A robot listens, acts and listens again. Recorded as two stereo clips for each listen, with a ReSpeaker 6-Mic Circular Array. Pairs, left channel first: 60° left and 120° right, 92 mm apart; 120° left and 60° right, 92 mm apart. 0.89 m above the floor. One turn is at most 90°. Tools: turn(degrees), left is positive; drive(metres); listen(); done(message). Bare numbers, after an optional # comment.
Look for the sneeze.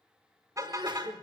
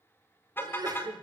# The sneeze: 95° right.
turn(-90)
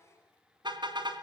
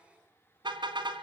done("Facing where the sneeze came from. I can't hear it now.")